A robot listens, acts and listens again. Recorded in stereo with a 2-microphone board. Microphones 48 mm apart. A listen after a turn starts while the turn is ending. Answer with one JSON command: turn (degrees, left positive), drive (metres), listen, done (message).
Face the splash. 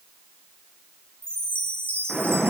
{"turn": -30}
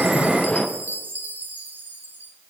{"turn": 15}
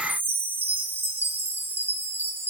{"done": "Facing where the splash came from. I can't hear it now."}